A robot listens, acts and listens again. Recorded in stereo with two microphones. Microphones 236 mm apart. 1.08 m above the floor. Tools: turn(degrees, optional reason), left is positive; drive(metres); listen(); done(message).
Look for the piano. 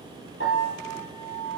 turn(degrees=60, reason="The piano: about 60° left or 120° left.")
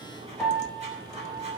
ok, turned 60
done("Found it: a piano, straight ahead.")